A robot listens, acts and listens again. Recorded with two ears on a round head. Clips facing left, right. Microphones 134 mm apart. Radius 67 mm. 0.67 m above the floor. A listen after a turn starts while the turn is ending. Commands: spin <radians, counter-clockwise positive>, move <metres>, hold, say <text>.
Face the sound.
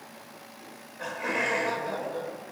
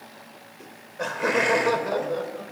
spin -1.13
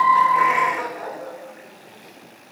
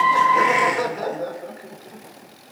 spin -0.87
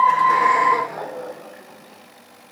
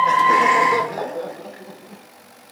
spin -0.61
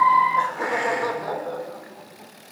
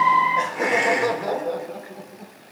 spin -0.44
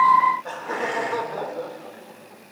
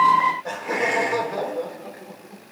spin -0.26
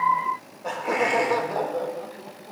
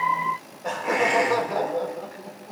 say Facing the laughter, 2 to 4 m away.